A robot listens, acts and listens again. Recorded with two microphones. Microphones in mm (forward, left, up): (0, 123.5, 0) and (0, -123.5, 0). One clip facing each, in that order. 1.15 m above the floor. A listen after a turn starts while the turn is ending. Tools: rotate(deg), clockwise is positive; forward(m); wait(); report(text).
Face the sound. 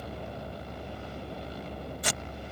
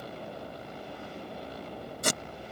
rotate(45)
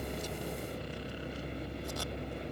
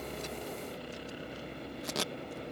wait()
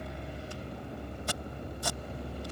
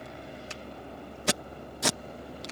rotate(90)
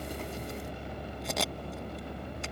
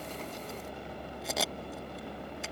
report("Facing the tape being pulled.")